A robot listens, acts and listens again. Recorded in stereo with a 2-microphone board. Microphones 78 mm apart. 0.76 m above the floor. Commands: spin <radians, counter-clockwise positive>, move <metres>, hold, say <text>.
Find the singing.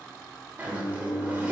spin 0.35
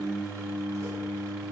spin 0.35
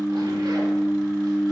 spin 0.44
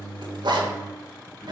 spin 2.44
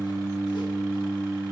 spin -0.61
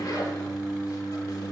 say Facing the singing, 2 to 4 m away.